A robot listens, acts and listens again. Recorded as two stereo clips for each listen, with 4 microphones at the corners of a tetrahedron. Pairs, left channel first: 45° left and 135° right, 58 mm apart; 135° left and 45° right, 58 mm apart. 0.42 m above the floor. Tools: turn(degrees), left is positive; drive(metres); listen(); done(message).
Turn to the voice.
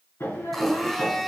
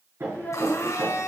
turn(degrees=80)
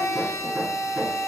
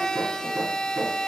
listen()
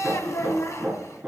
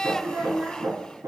turn(degrees=10)
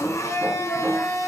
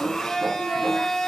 listen()
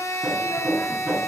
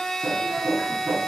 listen()
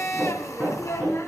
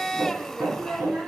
done("Facing the child speaking.")